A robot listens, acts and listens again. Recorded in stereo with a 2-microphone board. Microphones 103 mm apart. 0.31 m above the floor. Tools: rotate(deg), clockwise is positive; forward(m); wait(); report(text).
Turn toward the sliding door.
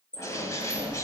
rotate(-90)
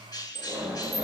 report("Found it: a sliding door, straight ahead, 2 to 4 m away.")